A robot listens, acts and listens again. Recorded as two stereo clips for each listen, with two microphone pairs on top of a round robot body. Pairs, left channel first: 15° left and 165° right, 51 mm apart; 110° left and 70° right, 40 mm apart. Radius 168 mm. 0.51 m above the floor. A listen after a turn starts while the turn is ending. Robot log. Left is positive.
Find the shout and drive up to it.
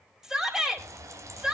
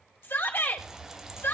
note: The shout: 115° left.
cmd yaw +115
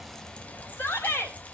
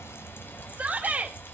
note: The shout is now 20° right.
cmd yaw -20
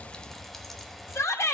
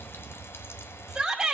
cmd fwd 1.0
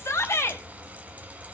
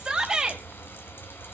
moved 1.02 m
cmd fwd 1.0
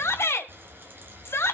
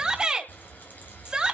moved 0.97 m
cmd fwd 1.0
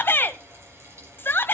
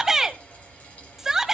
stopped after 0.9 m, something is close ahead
note: The shout is now 10° left.
cmd yaw +10
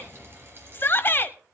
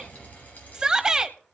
end: Arrived at the shout, straight ahead.